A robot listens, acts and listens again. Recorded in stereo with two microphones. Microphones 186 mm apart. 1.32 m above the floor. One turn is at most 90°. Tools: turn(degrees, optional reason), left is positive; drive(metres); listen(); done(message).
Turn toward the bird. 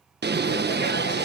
turn(degrees=-65, reason="The bird: about 65° right or 115° right.")
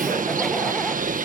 turn(degrees=-50, reason="So it is at 50° right.")
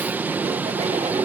turn(degrees=-10, reason="The bird is now 10° right.")
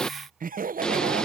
done("Found it: a bird, straight ahead.")